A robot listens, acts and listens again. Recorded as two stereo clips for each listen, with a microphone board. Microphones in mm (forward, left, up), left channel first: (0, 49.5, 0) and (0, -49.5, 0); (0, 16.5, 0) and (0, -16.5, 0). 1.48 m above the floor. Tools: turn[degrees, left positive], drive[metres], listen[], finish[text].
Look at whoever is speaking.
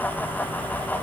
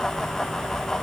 Action: listen[]
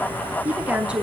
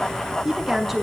Action: turn[-30]
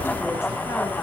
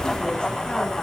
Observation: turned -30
Action: listen[]
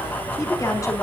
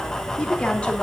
Thought: So it is at 35° left.
Action: turn[35]
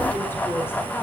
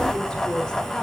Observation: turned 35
Thought: The woman speaking is now 20° left.
Action: turn[20]
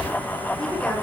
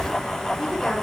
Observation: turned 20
Action: listen[]
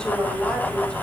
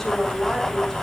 Thought: The woman speaking is now 10° left.
Action: turn[10]
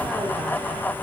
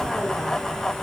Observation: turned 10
Action: listen[]
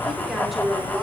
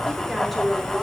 Action: finish[Found it: a woman speaking, straight ahead, over 4 m away.]